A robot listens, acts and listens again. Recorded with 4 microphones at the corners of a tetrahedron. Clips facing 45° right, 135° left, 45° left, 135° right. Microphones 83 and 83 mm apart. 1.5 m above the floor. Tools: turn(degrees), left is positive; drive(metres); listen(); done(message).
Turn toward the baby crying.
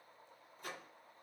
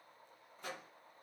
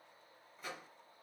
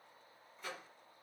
listen()
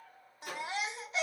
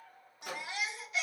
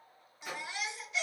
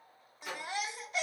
turn(degrees=-95)
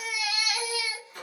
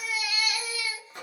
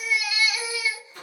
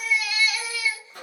turn(degrees=-30)
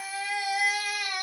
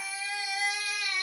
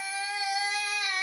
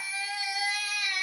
turn(degrees=-15)
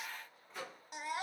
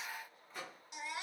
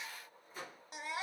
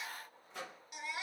done("Found it: a baby crying, straight ahead.")